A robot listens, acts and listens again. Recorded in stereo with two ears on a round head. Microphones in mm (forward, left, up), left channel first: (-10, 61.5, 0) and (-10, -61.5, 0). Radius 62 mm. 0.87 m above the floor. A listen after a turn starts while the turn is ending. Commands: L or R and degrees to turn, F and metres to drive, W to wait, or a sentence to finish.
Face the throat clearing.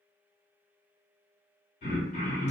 L60
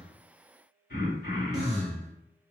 L65
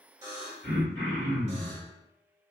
L20
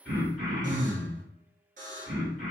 Facing the throat clearing.